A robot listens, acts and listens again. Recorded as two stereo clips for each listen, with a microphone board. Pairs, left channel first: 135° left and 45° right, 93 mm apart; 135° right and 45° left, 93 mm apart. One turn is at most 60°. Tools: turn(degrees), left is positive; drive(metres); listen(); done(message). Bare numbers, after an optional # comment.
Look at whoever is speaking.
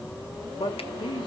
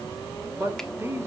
# The man speaking: 105° left.
turn(60)
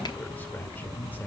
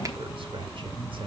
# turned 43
# The man speaking is now 65° left.
turn(60)
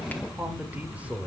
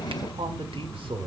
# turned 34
# The man speaking is now 30° left.
turn(30)
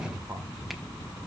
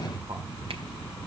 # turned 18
# Nothing new. It was at 10° left.
turn(10)
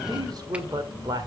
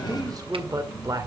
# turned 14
done("Facing the man speaking, 2 to 4 m away.")